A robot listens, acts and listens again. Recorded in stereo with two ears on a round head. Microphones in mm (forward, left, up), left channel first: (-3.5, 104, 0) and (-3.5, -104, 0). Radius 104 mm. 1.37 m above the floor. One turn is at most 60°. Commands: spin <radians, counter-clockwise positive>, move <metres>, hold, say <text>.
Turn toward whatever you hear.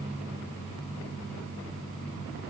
hold
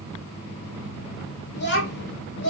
spin 0.96
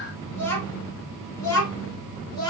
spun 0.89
spin 0.35
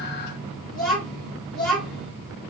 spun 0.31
say Facing the child speaking.